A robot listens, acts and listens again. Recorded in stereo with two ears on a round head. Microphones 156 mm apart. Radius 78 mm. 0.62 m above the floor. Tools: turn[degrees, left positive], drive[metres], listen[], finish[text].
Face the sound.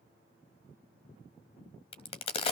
Thought: The crack: about 35° left or 145° left.
Action: turn[35]
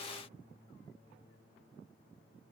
Action: listen[]
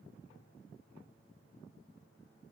Action: finish[I heard a crack, but can't make it out now. It was about straight ahead or 110° left.]